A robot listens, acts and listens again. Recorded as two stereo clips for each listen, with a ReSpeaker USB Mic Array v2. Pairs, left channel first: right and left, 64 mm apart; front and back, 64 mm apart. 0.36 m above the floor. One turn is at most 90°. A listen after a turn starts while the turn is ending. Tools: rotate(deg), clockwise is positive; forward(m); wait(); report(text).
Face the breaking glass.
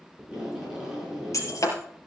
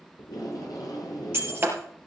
rotate(90)
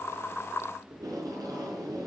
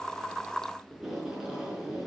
rotate(35)
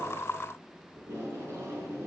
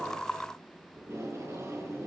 report("I heard breaking glass from this way, but can't make it out now.")